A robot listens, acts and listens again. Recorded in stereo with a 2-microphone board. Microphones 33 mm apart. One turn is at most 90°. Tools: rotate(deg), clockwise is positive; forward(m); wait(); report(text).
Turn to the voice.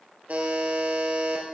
wait()
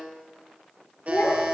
rotate(-90)
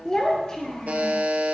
rotate(-20)
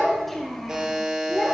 rotate(-10)
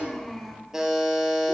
report("Found it: a child speaking, straight ahead.")